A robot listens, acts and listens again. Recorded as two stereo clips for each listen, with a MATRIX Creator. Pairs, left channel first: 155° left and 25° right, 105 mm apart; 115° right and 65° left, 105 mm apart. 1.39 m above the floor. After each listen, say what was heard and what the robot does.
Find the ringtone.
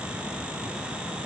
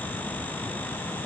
Keep listening.
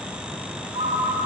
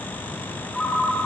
The ringtone: 35° right. Turn 35° right.
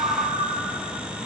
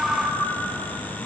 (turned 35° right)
The ringtone is now 15° right. Turn 15° right.
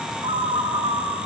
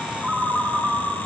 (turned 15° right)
The ringtone is now 10° right. Turn 10° right.
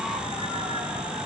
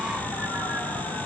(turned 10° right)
Keep listening.
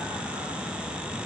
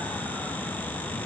Keep listening.
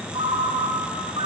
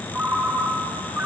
Facing the ringtone.